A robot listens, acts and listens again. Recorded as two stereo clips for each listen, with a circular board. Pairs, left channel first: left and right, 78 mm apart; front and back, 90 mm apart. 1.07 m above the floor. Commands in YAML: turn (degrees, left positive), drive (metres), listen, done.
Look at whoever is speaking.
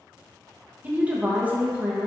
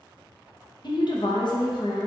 turn: -20
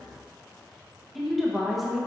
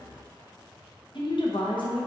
done: "Found it: a woman speaking, straight ahead, under 1 m away."